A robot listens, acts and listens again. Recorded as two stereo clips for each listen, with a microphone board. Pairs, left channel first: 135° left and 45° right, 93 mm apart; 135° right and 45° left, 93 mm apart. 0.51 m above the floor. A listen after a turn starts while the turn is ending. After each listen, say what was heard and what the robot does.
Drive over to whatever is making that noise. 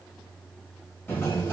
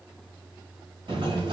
The sliding door: 70° left. Turn 70° left.
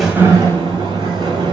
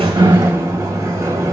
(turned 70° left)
The sliding door is now 15° right. Turn 15° right.
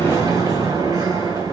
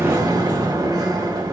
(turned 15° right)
Drive 1.0 m forward.
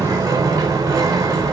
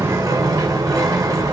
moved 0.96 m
Drive 1.0 m forward.
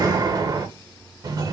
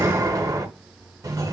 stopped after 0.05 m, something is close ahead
I am next to the sliding door.